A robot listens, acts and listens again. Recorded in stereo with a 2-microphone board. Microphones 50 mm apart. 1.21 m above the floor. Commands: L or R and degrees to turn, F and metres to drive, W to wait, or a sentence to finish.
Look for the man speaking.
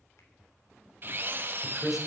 R30
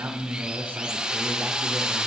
R145
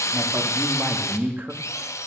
R40
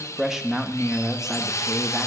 R10
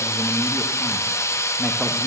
W
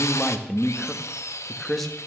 Found it: a man speaking, straight ahead.